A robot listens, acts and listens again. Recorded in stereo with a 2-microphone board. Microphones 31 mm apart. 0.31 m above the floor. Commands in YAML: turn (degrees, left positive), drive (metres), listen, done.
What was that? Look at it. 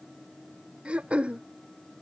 turn: -40
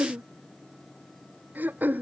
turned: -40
turn: -100
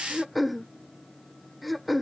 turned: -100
done: "Facing the throat clearing."